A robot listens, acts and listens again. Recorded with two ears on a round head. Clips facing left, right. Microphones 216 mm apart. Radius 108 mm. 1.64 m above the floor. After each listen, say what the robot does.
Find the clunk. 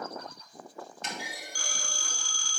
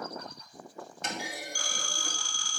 Turn 40° right.
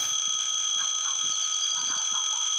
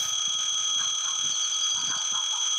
Keep listening.
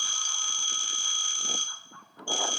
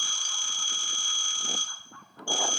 I heard a clunk, but can't make it out now. It was about straight ahead or 100° right.